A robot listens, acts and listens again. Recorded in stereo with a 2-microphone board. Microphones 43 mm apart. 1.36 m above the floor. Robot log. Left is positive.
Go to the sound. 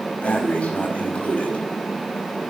note: The breathing: about 35° left or 145° left.
cmd yaw +35
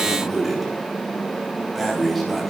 cmd fwd 1.0
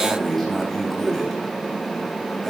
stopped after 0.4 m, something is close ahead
end: Blocked. The breathing is further on, straight ahead.